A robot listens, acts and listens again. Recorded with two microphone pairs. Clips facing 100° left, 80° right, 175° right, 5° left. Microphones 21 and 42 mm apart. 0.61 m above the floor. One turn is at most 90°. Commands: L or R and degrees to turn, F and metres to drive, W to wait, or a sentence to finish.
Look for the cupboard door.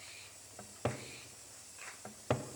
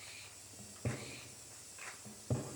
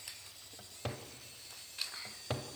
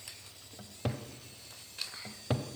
L90
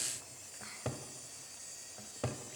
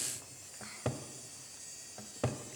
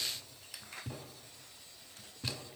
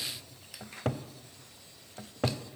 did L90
Facing the cupboard door.